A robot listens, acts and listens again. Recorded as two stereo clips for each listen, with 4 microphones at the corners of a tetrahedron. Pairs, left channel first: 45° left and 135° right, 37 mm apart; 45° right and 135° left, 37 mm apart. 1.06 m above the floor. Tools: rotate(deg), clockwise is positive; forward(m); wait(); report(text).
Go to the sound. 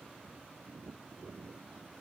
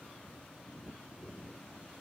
wait()
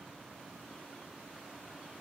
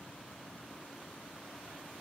wait()
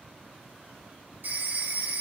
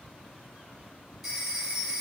rotate(140)
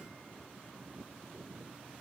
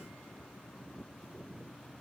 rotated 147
rotate(-10)
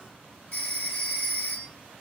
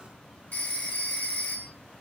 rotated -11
forward(1.0)
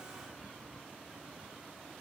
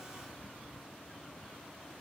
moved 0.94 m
wait()
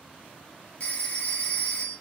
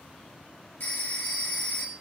rotate(10)
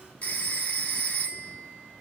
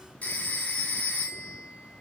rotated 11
forward(1.0)
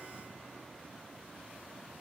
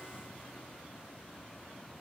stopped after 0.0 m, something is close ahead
wait()
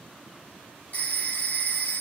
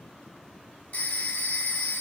report("I am next to the phone ringing.")